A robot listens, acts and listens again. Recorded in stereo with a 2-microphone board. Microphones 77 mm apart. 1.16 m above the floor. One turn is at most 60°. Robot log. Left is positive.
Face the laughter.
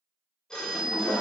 cmd yaw -30
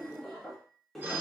end: Found it: laughter, straight ahead.